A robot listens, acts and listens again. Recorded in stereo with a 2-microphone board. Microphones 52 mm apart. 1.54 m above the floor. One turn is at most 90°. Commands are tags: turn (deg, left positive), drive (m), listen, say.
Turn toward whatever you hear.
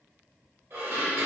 <turn deg="-45"/>
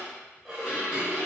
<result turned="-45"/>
<turn deg="-10"/>
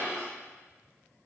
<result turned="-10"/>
<say>Facing the dishes clattering.</say>